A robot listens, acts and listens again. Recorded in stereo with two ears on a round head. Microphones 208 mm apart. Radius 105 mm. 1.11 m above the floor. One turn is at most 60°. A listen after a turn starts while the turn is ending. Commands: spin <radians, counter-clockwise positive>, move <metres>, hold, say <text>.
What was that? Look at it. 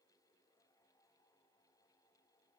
hold
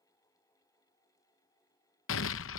spin 1.05
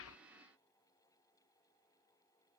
hold
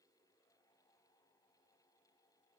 say I heard an explosion, but can't make it out now. It was about 5° left or 55° left.